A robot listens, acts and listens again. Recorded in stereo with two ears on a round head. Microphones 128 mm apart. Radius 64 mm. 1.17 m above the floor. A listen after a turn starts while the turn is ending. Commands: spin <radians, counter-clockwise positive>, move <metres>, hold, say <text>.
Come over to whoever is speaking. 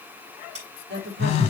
spin -1.57
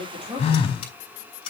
hold
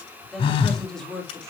move 1.0
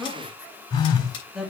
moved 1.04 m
move 1.0
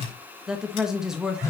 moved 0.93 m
move 1.0
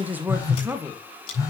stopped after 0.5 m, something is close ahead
spin -0.26
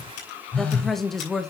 say Arrived at the woman speaking, straight ahead.